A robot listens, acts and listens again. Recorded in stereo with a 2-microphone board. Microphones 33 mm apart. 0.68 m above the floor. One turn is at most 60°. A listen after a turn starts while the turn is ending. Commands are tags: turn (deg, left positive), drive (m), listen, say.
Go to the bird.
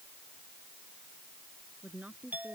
<listen/>
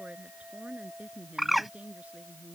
<turn deg="-30"/>
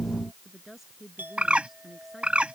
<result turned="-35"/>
<turn deg="-60"/>
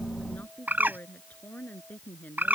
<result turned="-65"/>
<turn deg="-60"/>
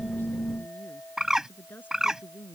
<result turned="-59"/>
<turn deg="-20"/>
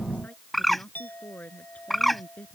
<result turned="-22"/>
<drive m="1.0"/>
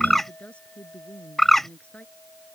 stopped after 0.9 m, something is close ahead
<say>Something is in my way. I am facing the bird but have not reached it.</say>